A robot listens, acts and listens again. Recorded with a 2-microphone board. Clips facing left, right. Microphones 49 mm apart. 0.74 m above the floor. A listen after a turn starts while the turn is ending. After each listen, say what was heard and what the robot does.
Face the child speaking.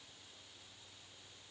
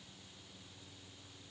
Keep listening.
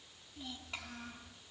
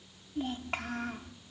The child speaking: about 60° right or 120° right. Turn 60° right.
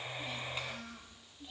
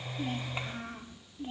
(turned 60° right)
So it is at 40° right. Turn 40° right.
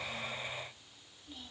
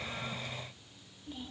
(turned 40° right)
The child speaking is now 20° right. Turn 20° right.
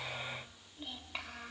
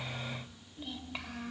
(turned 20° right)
Found it: a child speaking, straight ahead, 2 to 4 m away.